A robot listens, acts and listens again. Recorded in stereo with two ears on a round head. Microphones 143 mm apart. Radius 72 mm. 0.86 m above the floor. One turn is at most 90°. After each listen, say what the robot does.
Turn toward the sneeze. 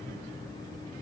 Keep listening.
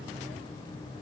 Keep listening.
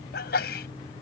Turn 75° left.
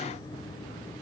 Keep listening.
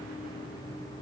I heard a sneeze, but can't make it out now. It was about straight ahead or 30° left.